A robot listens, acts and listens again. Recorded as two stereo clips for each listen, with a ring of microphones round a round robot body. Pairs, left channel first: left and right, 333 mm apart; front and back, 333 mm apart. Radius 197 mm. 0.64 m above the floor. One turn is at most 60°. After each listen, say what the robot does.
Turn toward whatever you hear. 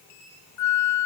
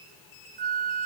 Turn 60° left.
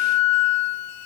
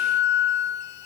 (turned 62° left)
Turn 55° left.
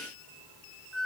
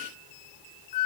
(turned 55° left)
Found it: a flute, straight ahead.